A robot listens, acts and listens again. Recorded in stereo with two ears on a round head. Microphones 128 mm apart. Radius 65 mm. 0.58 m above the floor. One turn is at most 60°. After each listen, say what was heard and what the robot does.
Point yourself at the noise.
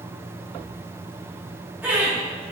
Turn 30° right.
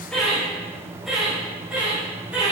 Turn 30° right.
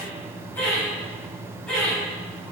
Found it: laughter, straight ahead.